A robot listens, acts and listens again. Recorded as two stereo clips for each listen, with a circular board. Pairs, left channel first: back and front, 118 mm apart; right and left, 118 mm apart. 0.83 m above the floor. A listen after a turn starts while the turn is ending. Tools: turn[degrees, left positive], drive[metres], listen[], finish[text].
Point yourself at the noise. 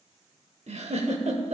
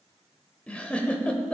Thought: The giggle: 10° right.
Action: turn[-10]
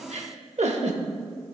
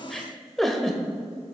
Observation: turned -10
Action: finish[Found it: a giggle, straight ahead.]